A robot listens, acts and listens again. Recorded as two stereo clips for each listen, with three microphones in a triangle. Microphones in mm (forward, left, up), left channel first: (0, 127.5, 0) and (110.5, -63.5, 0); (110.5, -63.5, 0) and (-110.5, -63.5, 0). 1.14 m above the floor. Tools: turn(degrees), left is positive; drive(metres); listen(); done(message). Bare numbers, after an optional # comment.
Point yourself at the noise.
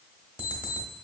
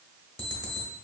# The alarm clock: 20° left.
turn(20)
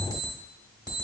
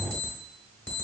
# The alarm clock is now 10° left.
turn(10)
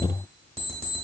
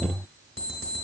done("Found it: an alarm clock, straight ahead.")